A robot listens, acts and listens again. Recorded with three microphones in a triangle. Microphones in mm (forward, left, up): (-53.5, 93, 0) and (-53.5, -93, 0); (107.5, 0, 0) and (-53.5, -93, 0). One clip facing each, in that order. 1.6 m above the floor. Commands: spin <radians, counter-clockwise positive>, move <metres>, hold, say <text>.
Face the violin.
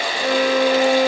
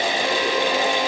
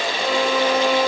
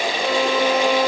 spin 2.09
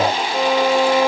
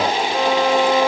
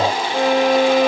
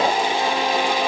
say Facing the violin.